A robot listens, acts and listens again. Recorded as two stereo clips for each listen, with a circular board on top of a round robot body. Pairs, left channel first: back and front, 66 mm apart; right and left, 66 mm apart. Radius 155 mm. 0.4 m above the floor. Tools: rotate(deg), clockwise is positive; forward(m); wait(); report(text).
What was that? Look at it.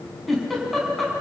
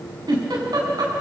rotate(-90)
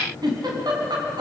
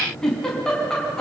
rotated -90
rotate(10)
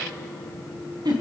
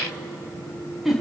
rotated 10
report("Facing the giggle.")